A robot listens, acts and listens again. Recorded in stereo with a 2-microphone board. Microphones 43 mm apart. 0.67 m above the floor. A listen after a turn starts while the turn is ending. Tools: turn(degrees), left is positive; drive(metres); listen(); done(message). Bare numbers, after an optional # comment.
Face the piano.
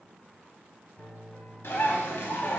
turn(30)
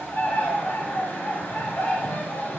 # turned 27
listen()
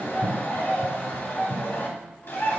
listen()
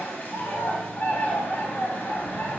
done("I heard a piano, but can't make it out now. It was about 15° right or 140° left.")